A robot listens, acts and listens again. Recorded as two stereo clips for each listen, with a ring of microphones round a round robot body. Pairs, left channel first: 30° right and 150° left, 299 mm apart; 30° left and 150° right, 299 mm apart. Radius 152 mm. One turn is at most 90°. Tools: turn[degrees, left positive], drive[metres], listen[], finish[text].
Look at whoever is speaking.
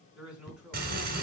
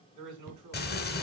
Thought: The man speaking: 125° right.
Action: turn[-90]
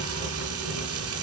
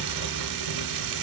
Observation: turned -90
Thought: Nothing new. It was at 35° right.
Action: turn[-35]
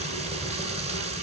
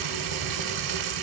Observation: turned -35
Action: listen[]
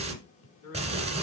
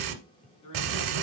Thought: The man speaking is now 10° left.
Action: turn[10]
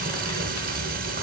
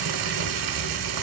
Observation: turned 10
Action: listen[]
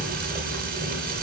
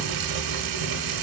Action: listen[]
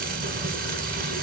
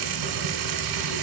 Action: finish[I heard a man speaking from this way, but can't make it out now.]